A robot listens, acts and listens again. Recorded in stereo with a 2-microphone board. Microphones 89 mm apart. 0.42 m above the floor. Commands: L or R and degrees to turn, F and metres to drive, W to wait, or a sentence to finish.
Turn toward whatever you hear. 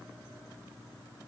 W
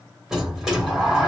R30
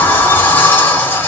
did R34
L25
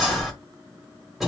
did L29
Facing the sliding door, 1 to 2 m away.